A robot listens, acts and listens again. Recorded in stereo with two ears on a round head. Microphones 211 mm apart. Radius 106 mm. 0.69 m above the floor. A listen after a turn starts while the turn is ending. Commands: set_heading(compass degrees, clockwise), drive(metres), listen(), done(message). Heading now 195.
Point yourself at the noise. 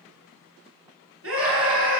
set_heading(255)
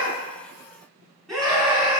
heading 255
done("Facing the scream.")